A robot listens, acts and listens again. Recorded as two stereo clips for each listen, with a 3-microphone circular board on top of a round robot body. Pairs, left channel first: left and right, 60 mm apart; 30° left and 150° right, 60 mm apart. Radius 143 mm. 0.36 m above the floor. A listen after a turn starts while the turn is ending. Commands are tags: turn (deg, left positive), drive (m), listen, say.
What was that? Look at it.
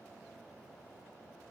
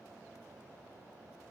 <listen/>
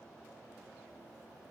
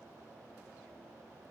<listen/>
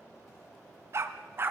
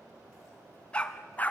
<turn deg="-35"/>
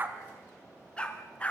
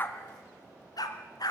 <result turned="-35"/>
<turn deg="20"/>
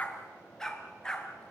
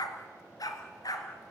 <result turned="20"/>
<turn deg="10"/>
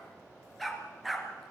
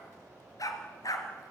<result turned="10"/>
<say>Found it: a dog barking, straight ahead, 2 to 4 m away.</say>